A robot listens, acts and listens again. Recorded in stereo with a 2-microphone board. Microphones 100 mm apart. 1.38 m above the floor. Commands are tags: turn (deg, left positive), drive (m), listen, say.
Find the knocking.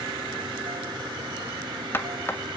<turn deg="20"/>
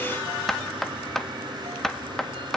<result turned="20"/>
<say>Facing the knocking, 1 to 2 m away.</say>